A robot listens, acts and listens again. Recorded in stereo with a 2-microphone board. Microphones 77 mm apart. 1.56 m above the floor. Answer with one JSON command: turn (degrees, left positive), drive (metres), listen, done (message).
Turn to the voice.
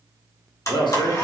{"turn": 70}
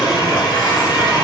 {"listen": true}
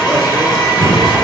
{"listen": true}
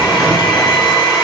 {"done": "I heard a man speaking, but can't make it out now. It was about straight ahead or 40° left."}